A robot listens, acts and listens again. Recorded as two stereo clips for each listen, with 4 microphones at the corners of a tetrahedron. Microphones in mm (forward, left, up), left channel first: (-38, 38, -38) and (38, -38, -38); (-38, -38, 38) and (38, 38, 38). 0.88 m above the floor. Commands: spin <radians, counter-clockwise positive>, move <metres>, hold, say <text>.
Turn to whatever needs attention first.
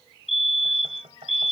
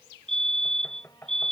spin 2.44
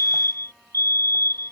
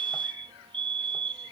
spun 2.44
spin 0.17
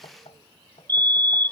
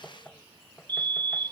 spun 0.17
say Facing the fire alarm.